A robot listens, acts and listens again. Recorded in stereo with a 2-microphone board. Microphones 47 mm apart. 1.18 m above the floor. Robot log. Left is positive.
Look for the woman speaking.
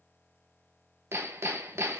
cmd idle
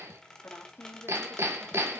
cmd yaw +90
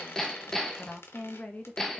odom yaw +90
note: So it is at 40° left.
cmd yaw +40
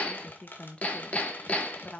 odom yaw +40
note: The woman speaking is now 25° left.
cmd yaw +25
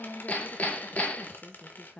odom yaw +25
note: The woman speaking is now 25° left.
cmd yaw +25
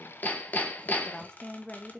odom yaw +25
note: The woman speaking is now 15° left.
cmd yaw +15
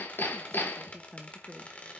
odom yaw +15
end: Facing the woman speaking, 1 to 2 m away.